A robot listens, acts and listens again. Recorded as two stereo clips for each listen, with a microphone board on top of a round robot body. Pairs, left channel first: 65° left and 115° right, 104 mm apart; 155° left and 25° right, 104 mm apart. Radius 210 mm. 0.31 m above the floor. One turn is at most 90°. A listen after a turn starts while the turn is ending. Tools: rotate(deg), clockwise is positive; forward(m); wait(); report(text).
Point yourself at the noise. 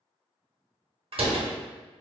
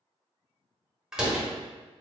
rotate(90)
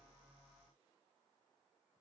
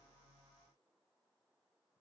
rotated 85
rotate(20)
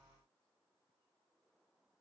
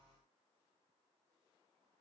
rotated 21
report("I heard a door slam from this way, but can't make it out now.")